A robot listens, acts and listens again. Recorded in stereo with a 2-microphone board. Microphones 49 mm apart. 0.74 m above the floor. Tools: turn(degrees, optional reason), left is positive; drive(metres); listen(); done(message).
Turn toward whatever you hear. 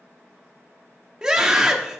turn(degrees=-30)
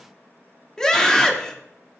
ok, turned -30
turn(degrees=15, reason="So it is at 15° left.")
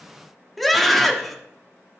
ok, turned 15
done("Found it: a scream, straight ahead, 1 to 2 m away.")